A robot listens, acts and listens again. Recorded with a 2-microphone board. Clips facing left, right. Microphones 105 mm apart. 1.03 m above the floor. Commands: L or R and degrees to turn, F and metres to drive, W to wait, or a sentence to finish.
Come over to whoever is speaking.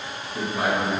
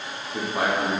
R75
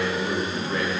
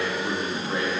R25
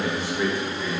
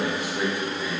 R15
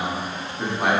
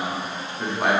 F1.0
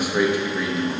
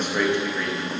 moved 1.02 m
L10
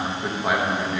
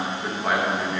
F1.0
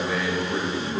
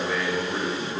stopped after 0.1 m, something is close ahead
Arrived at the man speaking, straight ahead.